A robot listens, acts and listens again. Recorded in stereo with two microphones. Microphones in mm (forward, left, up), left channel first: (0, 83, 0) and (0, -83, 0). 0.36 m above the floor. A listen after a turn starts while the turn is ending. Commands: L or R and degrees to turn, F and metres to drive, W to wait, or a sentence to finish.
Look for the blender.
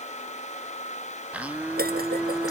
R30
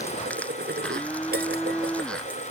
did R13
Facing the blender.